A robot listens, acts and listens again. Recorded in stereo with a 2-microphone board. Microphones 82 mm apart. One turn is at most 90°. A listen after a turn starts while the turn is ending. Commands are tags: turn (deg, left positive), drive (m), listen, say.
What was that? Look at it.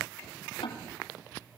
<turn deg="90"/>
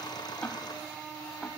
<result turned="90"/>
<listen/>
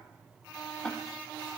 <say>Facing the ticking.</say>